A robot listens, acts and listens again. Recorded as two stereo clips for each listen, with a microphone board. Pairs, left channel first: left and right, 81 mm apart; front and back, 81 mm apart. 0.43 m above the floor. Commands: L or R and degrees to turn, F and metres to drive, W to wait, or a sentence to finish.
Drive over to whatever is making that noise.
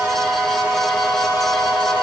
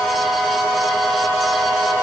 W
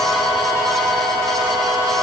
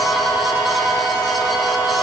W
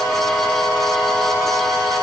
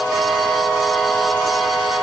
I can't make out anything to turn to.